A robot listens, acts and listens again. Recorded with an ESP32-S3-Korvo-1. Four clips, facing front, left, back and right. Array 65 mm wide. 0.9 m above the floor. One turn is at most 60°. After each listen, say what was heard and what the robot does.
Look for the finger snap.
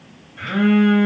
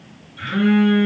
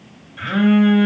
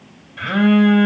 Keep listening.
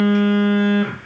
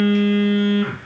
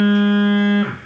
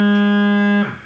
Keep listening.
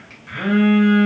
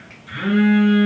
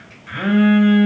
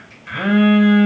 I can't make out a finger snap, only a phone buzzing.